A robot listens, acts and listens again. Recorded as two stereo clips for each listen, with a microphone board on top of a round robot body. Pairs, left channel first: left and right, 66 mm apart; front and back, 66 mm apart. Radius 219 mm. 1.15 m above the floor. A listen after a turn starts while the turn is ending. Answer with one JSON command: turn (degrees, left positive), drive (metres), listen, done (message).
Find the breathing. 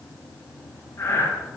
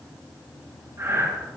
{"turn": 135}
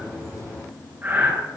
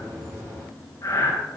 {"turn": -30}
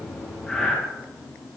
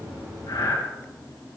{"turn": 10}
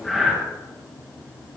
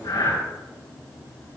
{"done": "Found it: breathing, straight ahead."}